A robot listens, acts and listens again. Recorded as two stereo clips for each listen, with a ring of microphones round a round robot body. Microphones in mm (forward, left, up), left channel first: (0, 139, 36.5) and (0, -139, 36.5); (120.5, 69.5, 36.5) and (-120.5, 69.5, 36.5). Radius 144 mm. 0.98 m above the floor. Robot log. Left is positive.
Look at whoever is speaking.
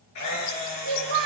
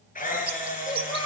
note: The child speaking: 75° right.
cmd yaw -75
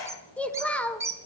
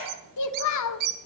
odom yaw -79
end: Facing the child speaking, 2 to 4 m away.